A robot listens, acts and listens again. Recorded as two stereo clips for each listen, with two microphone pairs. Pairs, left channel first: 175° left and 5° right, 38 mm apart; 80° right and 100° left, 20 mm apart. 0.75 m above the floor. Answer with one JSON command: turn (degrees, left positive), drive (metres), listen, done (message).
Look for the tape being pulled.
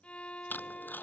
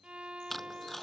{"turn": -160}
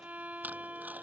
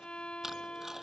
{"listen": true}
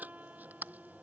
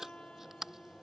{"turn": 30}
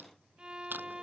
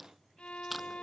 {"turn": 10}
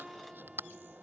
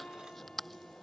{"done": "Facing the tape being pulled."}